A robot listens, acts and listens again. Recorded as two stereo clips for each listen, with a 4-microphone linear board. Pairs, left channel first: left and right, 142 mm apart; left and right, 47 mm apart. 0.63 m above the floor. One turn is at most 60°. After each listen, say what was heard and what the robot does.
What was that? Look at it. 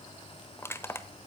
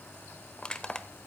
The crushing: about 20° left or 160° left. Turn 20° left.
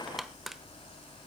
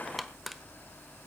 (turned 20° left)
Facing the crushing, 1 to 2 m away.